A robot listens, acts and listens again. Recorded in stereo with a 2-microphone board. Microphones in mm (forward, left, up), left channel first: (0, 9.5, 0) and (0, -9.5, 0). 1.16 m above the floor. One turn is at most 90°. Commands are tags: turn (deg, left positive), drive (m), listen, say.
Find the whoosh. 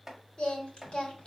<listen/>
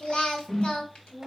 <turn deg="40"/>
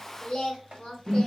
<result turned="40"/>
<say>Facing the whoosh.</say>